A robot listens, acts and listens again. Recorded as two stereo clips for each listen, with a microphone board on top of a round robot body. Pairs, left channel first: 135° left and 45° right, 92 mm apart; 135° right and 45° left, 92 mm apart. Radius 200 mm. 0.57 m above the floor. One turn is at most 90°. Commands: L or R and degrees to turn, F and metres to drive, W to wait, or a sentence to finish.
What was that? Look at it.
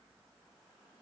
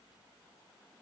W
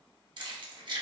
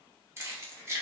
R15
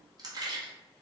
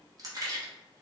Facing the keys jangling, 1 to 2 m away.